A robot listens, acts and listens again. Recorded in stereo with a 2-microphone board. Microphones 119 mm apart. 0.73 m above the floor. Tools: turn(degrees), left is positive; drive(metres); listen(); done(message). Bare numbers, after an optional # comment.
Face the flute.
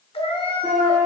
# The flute: about 15° right or 165° right.
turn(-15)
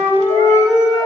done("Facing the flute, 2 to 4 m away.")